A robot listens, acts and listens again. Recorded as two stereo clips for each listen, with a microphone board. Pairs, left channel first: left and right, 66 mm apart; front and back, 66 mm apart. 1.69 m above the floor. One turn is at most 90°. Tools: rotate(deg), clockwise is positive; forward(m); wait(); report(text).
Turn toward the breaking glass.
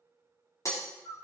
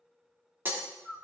rotate(-90)
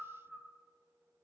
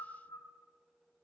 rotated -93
rotate(-30)
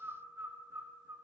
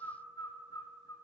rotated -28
report("Facing where the breaking glass came from. I can't hear it now.")